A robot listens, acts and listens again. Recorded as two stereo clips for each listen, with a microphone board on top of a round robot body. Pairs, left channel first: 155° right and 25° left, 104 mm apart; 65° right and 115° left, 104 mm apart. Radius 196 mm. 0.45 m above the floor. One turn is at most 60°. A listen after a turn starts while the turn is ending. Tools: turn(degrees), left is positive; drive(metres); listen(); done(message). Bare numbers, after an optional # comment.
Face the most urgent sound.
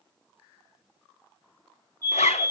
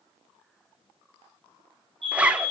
# The fire alarm: 140° left.
turn(60)
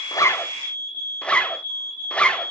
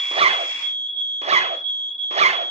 # The fire alarm is now 70° left.
turn(60)
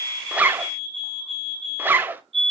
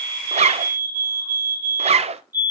# The fire alarm is now 45° left.
turn(45)
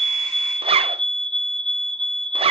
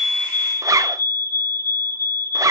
done("Facing the fire alarm.")